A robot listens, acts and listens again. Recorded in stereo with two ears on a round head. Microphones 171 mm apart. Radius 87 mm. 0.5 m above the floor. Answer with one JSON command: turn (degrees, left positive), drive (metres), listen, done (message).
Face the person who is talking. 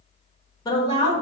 {"turn": 20}
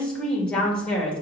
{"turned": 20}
{"done": "Found it: a woman speaking, straight ahead, 1 to 2 m away."}